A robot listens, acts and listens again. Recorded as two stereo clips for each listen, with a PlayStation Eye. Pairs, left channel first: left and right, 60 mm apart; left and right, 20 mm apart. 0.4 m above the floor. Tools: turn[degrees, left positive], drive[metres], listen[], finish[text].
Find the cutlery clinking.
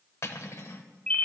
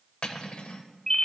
Thought: The cutlery clinking: about 50° left or 130° left.
Action: turn[50]
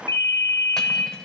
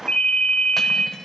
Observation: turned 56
Thought: So it is at 10° left.
Action: turn[10]
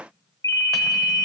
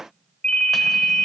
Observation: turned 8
Action: listen[]
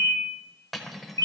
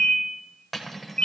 Action: finish[Found it: cutlery clinking, straight ahead.]